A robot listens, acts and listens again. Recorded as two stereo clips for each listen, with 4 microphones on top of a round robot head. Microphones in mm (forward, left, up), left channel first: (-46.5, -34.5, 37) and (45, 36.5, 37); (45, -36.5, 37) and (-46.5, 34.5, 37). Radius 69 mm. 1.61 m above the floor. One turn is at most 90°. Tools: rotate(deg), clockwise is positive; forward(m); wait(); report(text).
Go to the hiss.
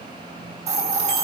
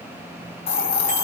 forward(1.0)
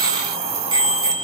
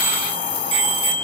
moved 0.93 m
forward(1.0)
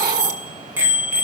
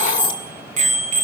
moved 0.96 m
rotate(-15)
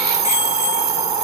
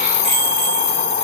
forward(1.0)
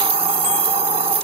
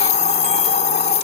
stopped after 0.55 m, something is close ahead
report("Arrived at the hiss, straight ahead.")